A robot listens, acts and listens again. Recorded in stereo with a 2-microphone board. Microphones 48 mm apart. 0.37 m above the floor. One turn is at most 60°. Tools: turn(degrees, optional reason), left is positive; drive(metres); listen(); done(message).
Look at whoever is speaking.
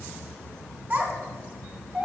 turn(degrees=-40, reason="The child speaking: about 40° right or 140° right.")
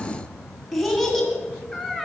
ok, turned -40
done("Facing the child speaking.")